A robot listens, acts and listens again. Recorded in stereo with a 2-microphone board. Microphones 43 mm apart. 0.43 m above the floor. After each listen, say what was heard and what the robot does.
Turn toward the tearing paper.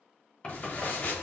The tearing paper: about 55° left or 125° left. Turn 55° left.
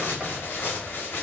So it is at 60° left. Turn 60° left.
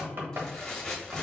The tearing paper is now 10° left. Turn 10° left.
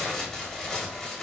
Found it: tearing paper, straight ahead.